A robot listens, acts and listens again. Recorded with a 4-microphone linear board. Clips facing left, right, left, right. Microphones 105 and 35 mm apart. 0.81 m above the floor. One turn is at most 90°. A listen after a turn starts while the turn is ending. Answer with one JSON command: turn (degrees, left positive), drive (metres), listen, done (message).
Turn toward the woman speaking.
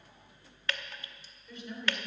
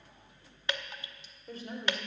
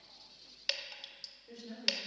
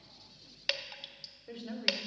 {"turn": -35}
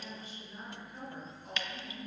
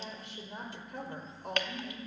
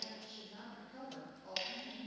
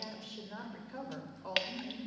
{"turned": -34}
{"turn": -90}
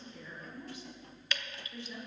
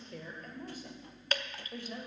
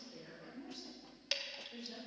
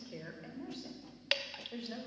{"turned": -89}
{"turn": -50}
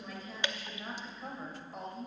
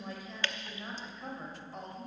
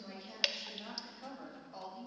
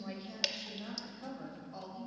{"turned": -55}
{"done": "Facing the woman speaking, 2 to 4 m away."}